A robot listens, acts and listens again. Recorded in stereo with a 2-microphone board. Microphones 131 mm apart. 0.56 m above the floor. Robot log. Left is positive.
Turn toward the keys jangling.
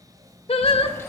note: The keys jangling: about 20° left or 160° left.
cmd yaw +20
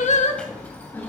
note: The keys jangling: about 15° left or 165° left.
cmd yaw +15
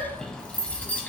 cmd yaw +30
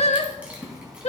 end: Facing the keys jangling.